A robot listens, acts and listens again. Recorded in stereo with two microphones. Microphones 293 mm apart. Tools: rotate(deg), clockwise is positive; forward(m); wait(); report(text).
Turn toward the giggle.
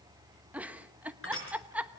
rotate(30)
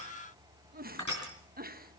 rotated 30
rotate(145)
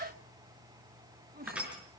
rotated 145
rotate(35)
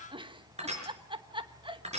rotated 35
rotate(20)
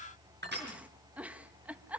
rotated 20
report("Found it: a giggle, straight ahead.")